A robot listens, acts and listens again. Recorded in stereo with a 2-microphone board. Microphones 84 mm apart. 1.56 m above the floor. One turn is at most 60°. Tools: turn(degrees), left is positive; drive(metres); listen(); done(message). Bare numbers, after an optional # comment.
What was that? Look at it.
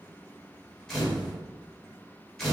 turn(30)
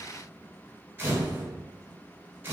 # So it is at 25° right.
turn(-25)
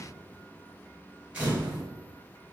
# The camera shutter is now 15° right.
turn(-15)
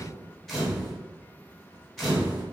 done("Found it: a camera shutter, straight ahead, 1 to 2 m away.")